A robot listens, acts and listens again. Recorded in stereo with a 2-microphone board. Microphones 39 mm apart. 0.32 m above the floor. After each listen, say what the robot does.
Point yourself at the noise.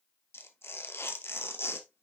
Turn 90° left.
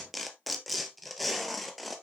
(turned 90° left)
Found it: tearing paper, straight ahead.